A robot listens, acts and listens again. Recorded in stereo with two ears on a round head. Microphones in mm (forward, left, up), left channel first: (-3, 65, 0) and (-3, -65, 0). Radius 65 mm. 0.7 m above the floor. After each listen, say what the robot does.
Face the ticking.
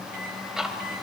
Turn 30° right.
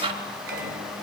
Turn 145° right.
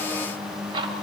Turn 35° right.
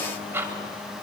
Turn 15° right.
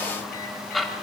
Found it: ticking, straight ahead.